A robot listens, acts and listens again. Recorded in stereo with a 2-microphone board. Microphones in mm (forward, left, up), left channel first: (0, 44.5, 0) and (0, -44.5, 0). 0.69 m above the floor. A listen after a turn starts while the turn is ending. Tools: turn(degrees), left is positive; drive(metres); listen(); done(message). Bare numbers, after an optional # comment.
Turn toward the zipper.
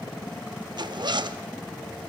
# The zipper: about 55° right or 125° right.
turn(-55)
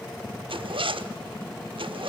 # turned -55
# So it is at 70° right.
turn(-70)
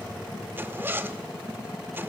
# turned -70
# The zipper is now 25° right.
turn(-25)
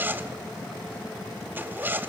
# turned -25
# The zipper is now 20° right.
turn(-20)
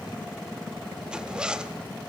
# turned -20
# The zipper is now 10° right.
turn(-10)
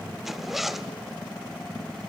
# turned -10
done("Facing the zipper.")